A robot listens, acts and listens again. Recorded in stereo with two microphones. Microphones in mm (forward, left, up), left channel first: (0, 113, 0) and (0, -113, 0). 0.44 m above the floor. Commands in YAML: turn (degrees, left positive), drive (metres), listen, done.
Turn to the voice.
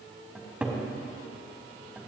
listen: true
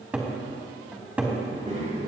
turn: -30
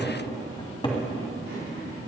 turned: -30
turn: -115
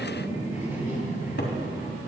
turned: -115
turn: -10
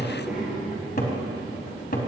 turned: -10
done: "Facing the child speaking."